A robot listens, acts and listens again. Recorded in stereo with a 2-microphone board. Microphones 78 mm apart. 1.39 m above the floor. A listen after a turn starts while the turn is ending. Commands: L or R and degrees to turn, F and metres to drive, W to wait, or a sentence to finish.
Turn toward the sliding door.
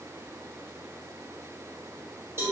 W
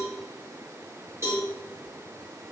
W
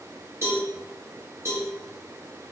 I can't make out a sliding door, only a cowbell.